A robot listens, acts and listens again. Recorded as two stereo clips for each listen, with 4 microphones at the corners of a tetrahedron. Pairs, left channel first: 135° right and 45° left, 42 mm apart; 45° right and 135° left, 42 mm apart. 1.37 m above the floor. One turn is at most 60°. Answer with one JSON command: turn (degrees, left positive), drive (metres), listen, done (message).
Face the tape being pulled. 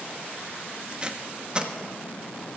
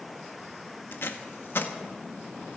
{"turn": -20}
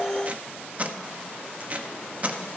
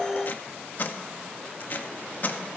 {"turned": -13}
{"done": "Facing the tape being pulled."}